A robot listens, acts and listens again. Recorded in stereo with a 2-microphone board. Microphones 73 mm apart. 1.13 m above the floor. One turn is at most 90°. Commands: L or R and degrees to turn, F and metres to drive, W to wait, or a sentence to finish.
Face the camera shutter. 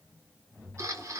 R40
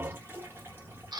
R90
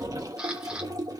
W
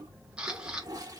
R15
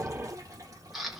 Found it: a camera shutter, straight ahead.